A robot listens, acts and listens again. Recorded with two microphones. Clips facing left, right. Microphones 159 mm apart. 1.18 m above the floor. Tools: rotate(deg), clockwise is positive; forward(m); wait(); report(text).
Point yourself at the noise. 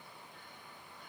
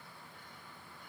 wait()
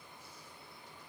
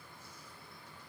wait()
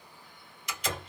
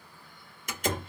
rotate(50)
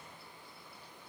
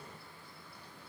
wait()
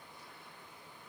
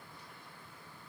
report("I heard a door slam, but can't make it out now. It was about straight ahead or 80° right.")